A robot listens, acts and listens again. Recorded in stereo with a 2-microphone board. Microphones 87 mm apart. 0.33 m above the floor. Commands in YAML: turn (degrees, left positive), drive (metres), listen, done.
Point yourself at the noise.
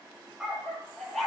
turn: 30
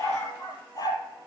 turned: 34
turn: 130
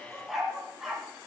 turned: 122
done: "Found it: a dog barking, straight ahead, 2 to 4 m away."